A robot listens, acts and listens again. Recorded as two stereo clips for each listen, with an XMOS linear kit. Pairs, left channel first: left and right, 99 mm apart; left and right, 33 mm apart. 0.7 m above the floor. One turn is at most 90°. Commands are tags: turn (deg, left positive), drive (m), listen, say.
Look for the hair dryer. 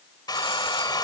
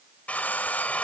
<turn deg="45"/>
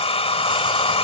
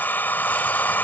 <turn deg="90"/>
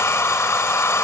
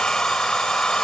<turn deg="25"/>
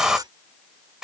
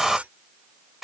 <say>Found it: a hair dryer, straight ahead.</say>